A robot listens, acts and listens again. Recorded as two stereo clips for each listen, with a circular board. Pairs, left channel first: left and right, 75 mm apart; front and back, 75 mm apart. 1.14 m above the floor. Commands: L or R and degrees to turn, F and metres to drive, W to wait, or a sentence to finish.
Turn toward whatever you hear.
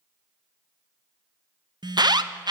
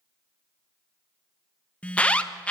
R75
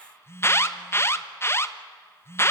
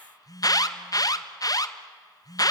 L35
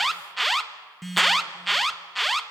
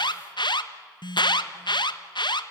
Facing the alarm.